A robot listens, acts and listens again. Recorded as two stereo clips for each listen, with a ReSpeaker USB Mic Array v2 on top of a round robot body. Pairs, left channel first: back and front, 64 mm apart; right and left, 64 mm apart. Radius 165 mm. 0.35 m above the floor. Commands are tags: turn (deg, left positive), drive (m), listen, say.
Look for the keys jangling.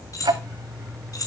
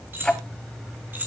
<turn deg="150"/>
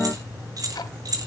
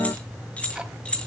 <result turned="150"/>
<turn deg="-15"/>
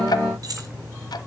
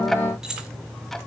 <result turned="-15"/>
<turn deg="10"/>
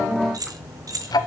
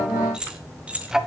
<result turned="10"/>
<turn deg="20"/>
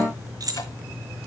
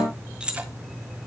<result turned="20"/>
<turn deg="15"/>
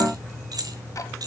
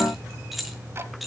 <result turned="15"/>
<say>Facing the keys jangling, 2 to 4 m away.</say>